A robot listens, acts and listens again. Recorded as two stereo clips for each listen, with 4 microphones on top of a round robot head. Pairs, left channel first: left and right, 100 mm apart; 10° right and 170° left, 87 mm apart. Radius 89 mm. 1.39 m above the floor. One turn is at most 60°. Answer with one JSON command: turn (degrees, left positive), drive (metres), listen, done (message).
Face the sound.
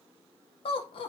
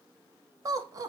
{"turn": 60}
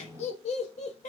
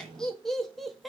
{"turn": 60}
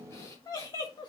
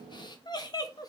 {"turn": 35}
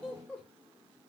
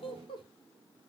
{"turn": 10}
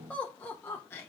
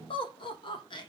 {"turn": 20}
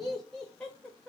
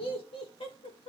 {"done": "Found it: laughter, straight ahead."}